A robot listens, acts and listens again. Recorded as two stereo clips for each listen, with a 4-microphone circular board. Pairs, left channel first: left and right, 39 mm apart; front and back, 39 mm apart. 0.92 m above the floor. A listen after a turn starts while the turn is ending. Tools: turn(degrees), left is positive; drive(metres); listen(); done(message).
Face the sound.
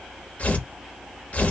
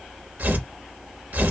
turn(degrees=140)
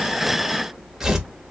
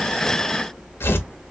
turn(degrees=-15)
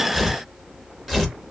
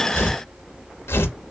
done("Found it: tearing paper, straight ahead.")